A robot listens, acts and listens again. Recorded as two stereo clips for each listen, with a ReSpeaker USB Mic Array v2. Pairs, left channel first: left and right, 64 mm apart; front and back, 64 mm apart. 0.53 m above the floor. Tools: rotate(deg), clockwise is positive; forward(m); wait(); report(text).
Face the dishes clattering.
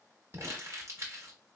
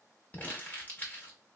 wait()
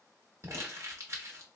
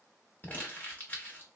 wait()
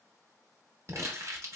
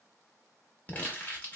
report("I can't make out dishes clattering, only crumpling.")